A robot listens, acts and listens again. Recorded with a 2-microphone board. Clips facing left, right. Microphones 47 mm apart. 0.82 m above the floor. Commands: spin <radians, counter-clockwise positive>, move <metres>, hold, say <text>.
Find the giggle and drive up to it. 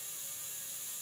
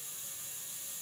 hold
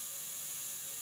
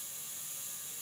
hold
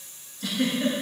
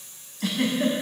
spin -1.57
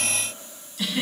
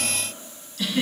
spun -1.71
spin 0.26
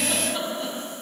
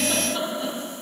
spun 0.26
move 1.0
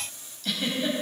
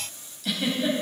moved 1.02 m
move 1.0
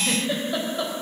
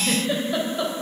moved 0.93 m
move 1.0
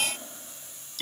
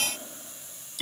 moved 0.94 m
spin -0.17
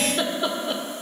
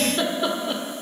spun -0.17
move 1.0
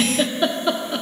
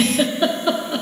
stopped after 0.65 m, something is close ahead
say I am next to the giggle.